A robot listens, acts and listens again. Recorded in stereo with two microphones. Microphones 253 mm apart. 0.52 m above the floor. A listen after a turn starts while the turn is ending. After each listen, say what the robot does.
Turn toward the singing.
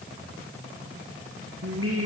Turn 60° right.
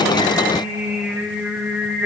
Found it: singing, straight ahead, over 4 m away.